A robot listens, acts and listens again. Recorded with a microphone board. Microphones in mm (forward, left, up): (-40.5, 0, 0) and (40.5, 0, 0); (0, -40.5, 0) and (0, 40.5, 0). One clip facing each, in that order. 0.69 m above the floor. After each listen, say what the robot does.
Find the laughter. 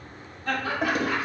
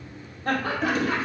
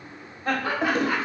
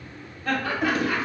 Turn 15° right.
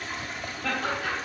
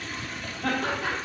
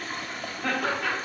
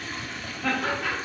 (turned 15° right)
Facing the laughter, 1 to 2 m away.